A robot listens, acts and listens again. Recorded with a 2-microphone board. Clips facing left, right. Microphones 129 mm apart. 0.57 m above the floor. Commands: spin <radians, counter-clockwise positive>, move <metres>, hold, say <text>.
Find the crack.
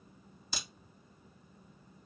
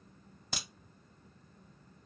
spin -1.13
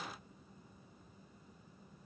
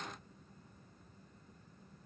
hold
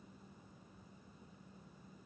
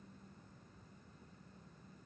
say I heard a crack, but can't make it out now. It was about straight ahead or 50° right.